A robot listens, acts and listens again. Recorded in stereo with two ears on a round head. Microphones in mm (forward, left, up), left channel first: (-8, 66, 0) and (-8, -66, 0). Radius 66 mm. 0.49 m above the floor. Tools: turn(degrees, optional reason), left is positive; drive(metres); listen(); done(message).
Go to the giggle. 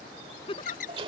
turn(degrees=35, reason="The giggle: about 35° left or 145° left.")
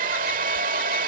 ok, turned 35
listen()
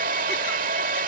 listen()
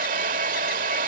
done("I heard a giggle, but can't make it out now. It was about straight ahead or 110° left. I did not reach it.")